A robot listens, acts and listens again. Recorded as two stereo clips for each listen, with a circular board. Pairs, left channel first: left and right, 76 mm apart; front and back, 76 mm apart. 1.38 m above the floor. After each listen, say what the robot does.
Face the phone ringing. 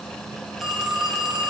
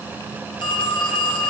Found it: a phone ringing, straight ahead.